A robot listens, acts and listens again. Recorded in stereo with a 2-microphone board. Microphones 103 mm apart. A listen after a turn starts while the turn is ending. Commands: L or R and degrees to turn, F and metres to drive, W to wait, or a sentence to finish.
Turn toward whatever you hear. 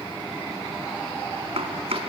R75
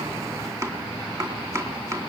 R30
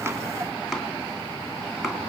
Facing the chopping.